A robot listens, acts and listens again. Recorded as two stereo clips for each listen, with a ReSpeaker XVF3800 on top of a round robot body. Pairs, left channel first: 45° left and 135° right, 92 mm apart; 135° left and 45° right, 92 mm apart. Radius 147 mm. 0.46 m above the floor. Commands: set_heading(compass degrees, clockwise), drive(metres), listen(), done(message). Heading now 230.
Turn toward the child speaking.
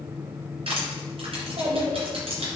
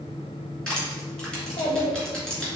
set_heading(60)
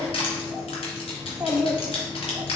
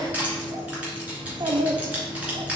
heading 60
set_heading(125)
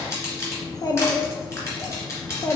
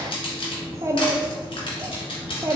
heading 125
done("Found it: a child speaking, straight ahead, 1 to 2 m away.")